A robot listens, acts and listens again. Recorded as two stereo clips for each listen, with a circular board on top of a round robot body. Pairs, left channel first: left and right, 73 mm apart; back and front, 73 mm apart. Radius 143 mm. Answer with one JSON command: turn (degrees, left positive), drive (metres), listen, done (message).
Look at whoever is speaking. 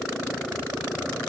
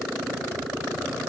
{"listen": true}
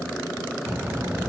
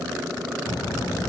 {"turn": -150}
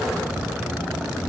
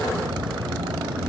{"turn": -10}
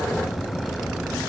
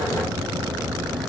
{"done": "Found it: a child speaking, straight ahead."}